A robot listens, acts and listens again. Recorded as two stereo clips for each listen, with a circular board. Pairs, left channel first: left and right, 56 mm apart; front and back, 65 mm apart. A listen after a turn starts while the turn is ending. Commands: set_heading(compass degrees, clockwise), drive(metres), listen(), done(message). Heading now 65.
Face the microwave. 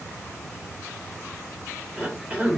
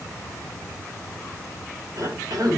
listen()
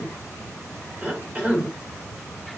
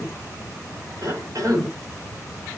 listen()
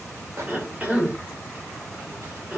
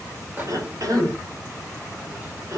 set_heading(190)
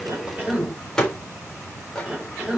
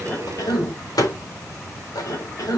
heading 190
set_heading(180)
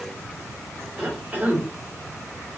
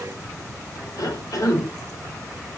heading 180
listen()
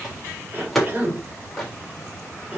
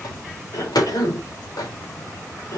done("Found it: a microwave, straight ahead, 2 to 4 m away.")